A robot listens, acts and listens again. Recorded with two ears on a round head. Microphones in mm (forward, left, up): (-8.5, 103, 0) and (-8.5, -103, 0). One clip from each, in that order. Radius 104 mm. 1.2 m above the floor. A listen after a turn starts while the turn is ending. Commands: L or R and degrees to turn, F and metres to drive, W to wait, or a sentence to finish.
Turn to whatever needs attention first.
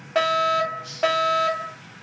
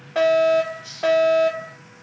L30
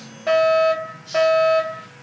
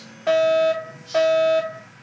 Found it: a fire alarm, straight ahead.